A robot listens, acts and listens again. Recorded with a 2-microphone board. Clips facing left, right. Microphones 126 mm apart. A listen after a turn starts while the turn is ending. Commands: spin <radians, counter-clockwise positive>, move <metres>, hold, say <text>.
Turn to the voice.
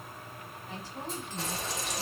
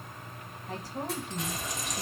spin -0.79
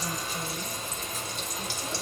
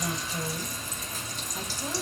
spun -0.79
hold
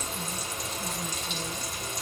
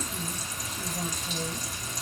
hold
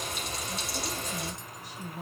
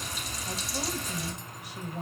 spin -1.48
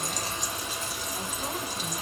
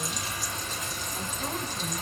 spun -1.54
hold
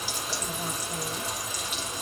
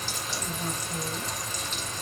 say Found it: a woman speaking, straight ahead.